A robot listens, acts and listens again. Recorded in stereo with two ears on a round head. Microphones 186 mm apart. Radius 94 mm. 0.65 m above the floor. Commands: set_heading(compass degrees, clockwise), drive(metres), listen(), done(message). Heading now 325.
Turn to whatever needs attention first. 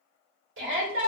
set_heading(30)
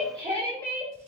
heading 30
set_heading(55)
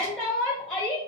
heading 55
done("Found it: a shout, straight ahead.")